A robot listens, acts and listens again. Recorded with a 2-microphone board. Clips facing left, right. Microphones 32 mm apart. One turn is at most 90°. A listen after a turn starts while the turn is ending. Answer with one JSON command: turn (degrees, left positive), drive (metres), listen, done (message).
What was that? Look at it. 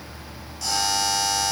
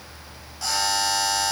{"turn": -30}
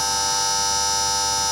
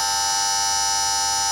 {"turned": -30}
{"done": "Facing the buzzer."}